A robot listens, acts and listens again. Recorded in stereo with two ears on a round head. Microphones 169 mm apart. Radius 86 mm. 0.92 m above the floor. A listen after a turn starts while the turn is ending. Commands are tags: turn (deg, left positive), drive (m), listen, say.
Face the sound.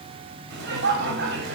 <turn deg="-70"/>
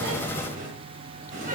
<turn deg="-40"/>
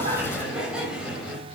<say>Found it: laughter, straight ahead, over 4 m away.</say>